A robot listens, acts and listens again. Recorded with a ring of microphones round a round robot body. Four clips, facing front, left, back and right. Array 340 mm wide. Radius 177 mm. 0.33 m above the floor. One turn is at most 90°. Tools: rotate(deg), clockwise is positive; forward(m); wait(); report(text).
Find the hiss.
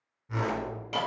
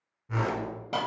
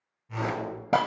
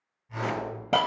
rotate(90)
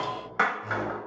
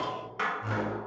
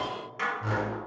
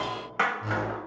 rotate(35)
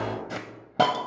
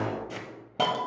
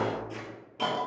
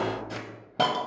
rotate(10)
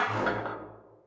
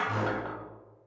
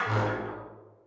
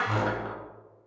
report("Found it: a hiss, straight ahead.")